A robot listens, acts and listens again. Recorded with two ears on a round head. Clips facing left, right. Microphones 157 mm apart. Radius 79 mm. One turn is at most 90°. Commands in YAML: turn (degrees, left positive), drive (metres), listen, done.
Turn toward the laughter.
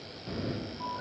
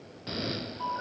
listen: true
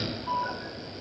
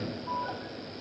listen: true
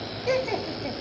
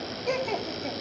turn: 30
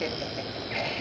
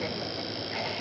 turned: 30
listen: true
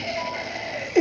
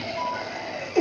turn: 20
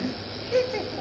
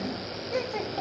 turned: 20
turn: 90
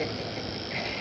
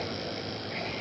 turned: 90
turn: 60
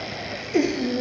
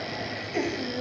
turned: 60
turn: 50
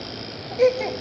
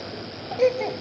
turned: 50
done: "Found it: laughter, straight ahead."